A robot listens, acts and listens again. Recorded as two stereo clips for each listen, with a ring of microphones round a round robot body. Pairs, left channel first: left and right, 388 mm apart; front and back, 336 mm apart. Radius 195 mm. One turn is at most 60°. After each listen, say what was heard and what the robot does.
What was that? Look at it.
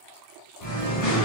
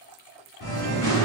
The singing: 45° left. Turn 45° left.
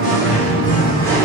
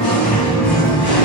Facing the singing, 1 to 2 m away.